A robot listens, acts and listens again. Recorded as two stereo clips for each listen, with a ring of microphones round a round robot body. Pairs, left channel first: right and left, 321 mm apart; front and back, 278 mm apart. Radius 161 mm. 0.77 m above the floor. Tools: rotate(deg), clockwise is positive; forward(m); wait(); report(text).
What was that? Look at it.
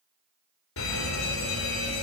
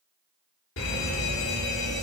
rotate(45)
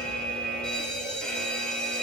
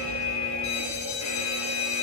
report("Found it: a fire alarm, straight ahead, 2 to 4 m away.")